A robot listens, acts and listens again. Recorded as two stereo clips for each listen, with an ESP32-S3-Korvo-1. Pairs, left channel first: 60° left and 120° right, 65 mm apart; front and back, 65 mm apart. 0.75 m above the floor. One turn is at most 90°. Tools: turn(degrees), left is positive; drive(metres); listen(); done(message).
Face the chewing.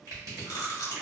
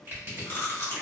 turn(degrees=45)
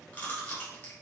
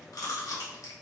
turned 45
done("Found it: chewing, straight ahead, under 1 m away.")